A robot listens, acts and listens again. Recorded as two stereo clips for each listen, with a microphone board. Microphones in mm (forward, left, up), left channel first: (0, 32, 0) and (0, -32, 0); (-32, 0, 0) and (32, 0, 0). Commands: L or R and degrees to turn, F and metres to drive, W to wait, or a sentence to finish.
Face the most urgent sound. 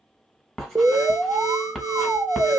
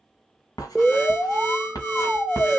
R100
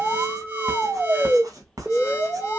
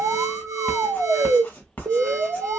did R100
R25
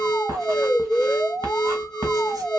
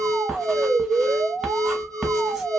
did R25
Found it: an alarm, straight ahead, 1 to 2 m away.